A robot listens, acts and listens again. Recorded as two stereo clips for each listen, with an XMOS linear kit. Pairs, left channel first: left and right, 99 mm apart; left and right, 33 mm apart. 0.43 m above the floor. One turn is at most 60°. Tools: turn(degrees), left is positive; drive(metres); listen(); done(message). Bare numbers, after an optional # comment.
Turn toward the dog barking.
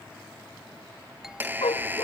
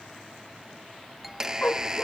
# The dog barking: about 70° left or 110° left.
turn(60)
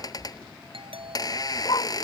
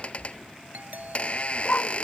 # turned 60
# So it is at 50° left.
turn(50)
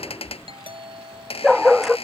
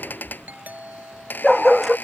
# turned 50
done("Found it: a dog barking, straight ahead.")